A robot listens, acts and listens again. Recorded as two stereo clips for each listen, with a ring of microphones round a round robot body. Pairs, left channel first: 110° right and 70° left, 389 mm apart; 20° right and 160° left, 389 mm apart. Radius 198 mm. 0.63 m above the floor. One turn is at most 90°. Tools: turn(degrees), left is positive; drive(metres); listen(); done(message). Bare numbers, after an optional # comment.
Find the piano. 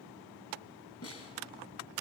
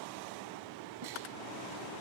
listen()
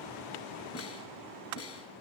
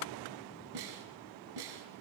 listen()
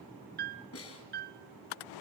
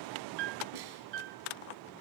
# The piano: 135° left.
turn(90)
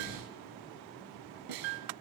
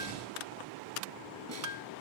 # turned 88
# The piano is now 45° left.
turn(45)
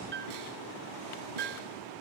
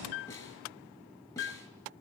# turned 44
done("Facing the piano, 1 to 2 m away.")